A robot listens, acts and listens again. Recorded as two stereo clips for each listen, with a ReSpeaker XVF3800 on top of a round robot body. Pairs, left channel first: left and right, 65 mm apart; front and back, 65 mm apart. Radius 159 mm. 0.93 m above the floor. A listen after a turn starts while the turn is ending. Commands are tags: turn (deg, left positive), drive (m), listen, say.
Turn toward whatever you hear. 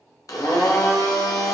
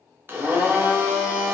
<turn deg="125"/>
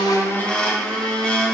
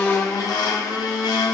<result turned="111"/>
<turn deg="15"/>
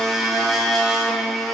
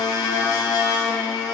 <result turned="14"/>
<say>Found it: a blender, straight ahead.</say>